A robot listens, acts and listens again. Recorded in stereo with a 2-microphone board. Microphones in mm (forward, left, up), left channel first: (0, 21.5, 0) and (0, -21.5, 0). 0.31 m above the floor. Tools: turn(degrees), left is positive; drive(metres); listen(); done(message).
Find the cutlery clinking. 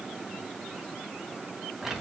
listen()
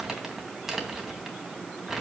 listen()
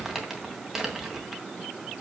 done("I can't make out cutlery clinking, only crumpling.")